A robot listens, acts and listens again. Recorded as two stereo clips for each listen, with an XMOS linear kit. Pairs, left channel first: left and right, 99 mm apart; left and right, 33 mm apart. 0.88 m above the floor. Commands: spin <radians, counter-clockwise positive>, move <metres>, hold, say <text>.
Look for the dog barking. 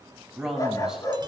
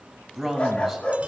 spin 0.70
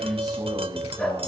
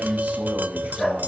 spin 0.17
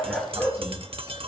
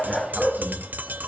say Facing the dog barking, over 4 m away.